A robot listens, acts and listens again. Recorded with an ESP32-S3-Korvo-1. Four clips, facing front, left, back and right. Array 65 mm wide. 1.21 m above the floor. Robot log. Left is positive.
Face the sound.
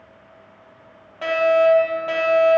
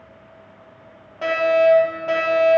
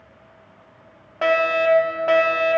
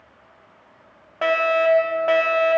note: The fire alarm: 140° right.
cmd yaw -140
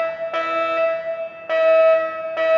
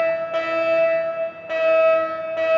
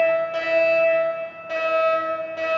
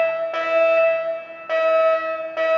note: The fire alarm is now 20° right.
cmd yaw -20
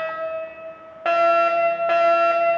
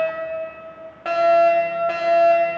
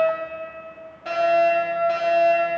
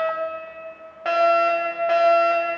end: Found it: a fire alarm, straight ahead, 2 to 4 m away.